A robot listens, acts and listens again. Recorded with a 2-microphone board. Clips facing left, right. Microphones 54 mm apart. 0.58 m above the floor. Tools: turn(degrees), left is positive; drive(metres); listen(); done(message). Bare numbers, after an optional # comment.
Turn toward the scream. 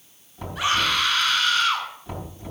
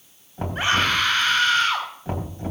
# The scream: about 35° right or 145° right.
turn(-35)
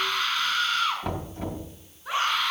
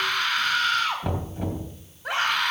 # So it is at 105° right.
turn(-105)
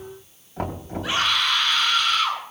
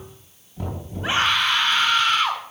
# The scream is now 35° right.
turn(-35)
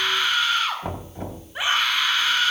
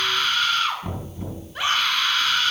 # The scream is now 15° left.
turn(15)
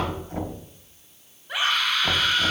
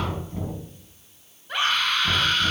done("Facing the scream, over 4 m away.")